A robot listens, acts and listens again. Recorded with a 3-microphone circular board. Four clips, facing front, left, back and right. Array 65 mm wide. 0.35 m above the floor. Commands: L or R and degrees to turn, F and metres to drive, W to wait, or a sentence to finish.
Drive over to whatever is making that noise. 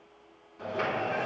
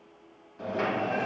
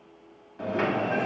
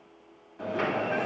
R170
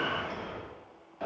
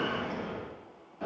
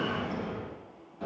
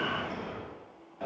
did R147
R25
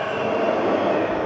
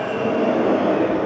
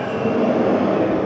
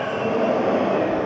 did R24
F1.0
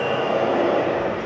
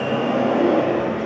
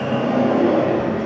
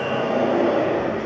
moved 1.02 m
F1.0
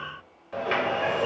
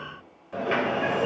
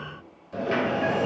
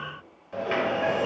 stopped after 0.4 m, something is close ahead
Arrived at the sliding door, straight ahead.